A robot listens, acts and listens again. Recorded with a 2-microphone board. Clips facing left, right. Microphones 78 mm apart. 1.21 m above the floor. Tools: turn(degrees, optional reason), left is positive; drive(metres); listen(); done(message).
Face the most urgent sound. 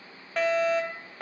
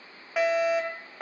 turn(degrees=-30)
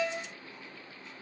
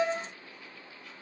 turn(degrees=-145, reason="So it is at 145° right.")
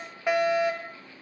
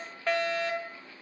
turn(degrees=10, reason="The fire alarm is now 10° left.")
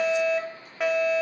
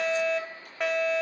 done("Found it: a fire alarm, straight ahead.")